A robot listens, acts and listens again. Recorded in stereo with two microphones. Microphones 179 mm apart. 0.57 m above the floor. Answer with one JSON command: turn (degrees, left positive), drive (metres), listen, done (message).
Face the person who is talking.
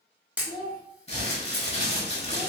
{"turn": -50}
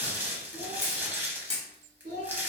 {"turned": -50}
{"turn": -80}
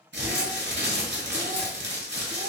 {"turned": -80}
{"listen": true}
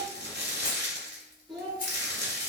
{"done": "Found it: a child speaking, straight ahead."}